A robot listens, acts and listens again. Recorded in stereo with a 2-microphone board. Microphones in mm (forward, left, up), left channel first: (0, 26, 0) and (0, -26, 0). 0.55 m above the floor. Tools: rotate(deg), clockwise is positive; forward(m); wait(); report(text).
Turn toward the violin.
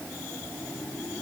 wait()
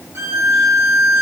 rotate(60)
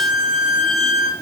report("Facing the violin, under 1 m away.")